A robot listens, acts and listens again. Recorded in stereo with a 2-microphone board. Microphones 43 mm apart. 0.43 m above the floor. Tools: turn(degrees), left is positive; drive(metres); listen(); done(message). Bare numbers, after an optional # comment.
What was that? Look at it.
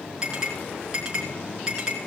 # The clink: about 20° right or 160° right.
turn(-20)
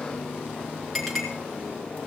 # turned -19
done("Facing the clink.")